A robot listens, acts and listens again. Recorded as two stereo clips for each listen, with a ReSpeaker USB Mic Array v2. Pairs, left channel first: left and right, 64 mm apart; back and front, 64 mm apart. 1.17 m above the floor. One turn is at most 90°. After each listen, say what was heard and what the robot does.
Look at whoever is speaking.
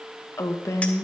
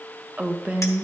The woman speaking: 65° left. Turn 65° left.
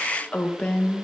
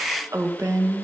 The woman speaking is now 25° left. Turn 25° left.
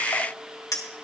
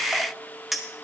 Keep listening.
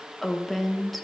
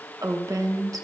Found it: a woman speaking, straight ahead, 1 to 2 m away.